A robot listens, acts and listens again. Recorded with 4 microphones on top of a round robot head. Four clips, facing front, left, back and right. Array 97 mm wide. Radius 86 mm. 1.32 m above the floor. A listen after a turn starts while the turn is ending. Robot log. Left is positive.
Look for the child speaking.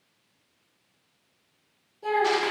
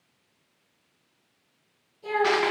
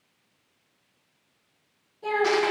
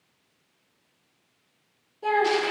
note: The child speaking: 80° right.
cmd yaw -80
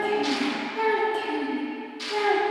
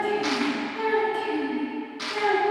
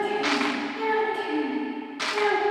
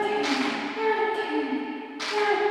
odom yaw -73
end: Facing the child speaking, over 4 m away.